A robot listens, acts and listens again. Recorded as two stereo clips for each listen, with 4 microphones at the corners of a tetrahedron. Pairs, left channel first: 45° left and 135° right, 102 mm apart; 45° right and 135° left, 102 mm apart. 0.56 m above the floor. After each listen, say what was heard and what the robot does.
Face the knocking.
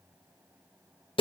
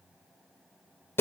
Keep listening.
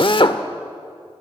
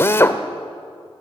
Keep listening.
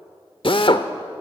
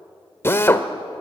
I can't make out knocking, only a drill.